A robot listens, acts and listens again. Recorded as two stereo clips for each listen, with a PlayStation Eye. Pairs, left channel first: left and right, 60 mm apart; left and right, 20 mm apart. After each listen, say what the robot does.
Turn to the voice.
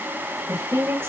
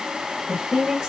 Turn 35° right.
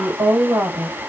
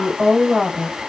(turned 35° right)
Turn 105° right.
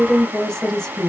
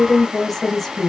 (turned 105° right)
Turn 10° left.
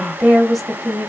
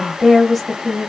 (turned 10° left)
Found it: a woman speaking, straight ahead.